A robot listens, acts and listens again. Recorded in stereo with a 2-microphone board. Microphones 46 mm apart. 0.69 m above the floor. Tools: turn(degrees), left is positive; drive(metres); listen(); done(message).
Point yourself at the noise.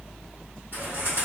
turn(degrees=-55)
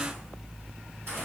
listen()
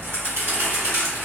turn(degrees=-65)
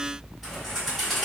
done("Found it: a bird, straight ahead.")